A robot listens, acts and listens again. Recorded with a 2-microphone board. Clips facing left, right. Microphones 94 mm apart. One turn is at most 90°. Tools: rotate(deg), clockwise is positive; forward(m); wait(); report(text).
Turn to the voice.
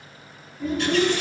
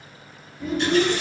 rotate(-30)
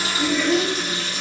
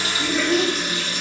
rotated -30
rotate(-90)
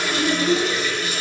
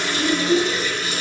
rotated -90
rotate(-60)
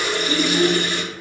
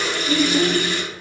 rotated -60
report("Found it: a child speaking, straight ahead.")